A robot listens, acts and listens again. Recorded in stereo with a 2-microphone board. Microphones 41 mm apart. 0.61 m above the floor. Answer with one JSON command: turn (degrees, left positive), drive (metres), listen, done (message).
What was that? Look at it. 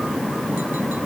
{"listen": true}
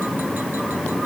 {"listen": true}
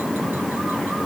{"done": "I can't make out anything."}